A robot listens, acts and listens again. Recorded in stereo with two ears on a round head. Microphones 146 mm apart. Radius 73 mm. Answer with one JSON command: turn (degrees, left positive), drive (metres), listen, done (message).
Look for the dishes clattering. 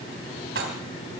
{"turn": -90}
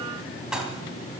{"done": "Found it: dishes clattering, straight ahead, 2 to 4 m away."}